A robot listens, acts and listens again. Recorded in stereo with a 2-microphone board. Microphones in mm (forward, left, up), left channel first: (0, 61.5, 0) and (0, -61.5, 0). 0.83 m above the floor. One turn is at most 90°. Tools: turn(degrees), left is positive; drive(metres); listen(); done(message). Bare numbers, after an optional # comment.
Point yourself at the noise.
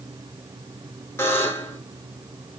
# The buzzer: about 20° left or 160° left.
turn(20)
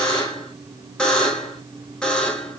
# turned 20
# So it is at 10° left.
turn(10)
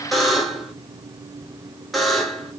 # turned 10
done("Facing the buzzer.")